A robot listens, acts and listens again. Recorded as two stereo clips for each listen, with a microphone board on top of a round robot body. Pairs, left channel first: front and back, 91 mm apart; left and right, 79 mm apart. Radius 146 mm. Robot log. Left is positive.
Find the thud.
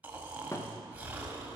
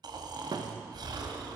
note: The thud: 60° right.
cmd yaw -60
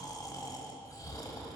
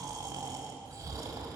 end: Facing where the thud came from. I can't hear it now.